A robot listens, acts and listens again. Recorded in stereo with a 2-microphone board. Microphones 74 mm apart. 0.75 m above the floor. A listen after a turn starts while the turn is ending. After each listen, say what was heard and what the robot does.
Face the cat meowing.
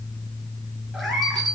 Turn 30° left.
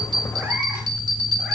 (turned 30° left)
Keep listening.
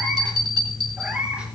So it is at 15° right. Turn 15° right.
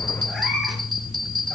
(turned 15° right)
Facing the cat meowing, 2 to 4 m away.